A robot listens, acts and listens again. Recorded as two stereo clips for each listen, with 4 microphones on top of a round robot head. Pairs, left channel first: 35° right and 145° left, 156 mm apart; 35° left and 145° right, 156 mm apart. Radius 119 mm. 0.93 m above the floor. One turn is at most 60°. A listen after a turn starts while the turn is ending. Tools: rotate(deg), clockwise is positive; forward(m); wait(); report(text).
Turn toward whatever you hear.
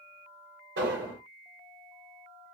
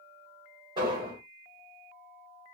rotate(-60)
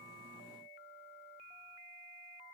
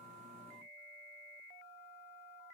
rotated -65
rotate(-60)
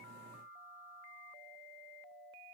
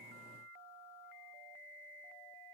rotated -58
rotate(-30)
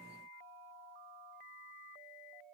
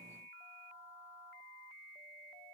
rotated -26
report("I heard an explosion from this way, but can't make it out now.")